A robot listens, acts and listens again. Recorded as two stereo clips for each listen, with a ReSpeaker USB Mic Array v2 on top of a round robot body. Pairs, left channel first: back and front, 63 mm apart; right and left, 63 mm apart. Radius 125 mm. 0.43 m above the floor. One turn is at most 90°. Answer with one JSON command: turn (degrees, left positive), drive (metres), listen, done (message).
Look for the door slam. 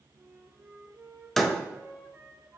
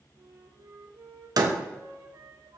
{"turn": 90}
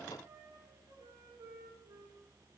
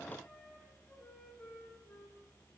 {"done": "I heard a door slam from this way, but can't make it out now."}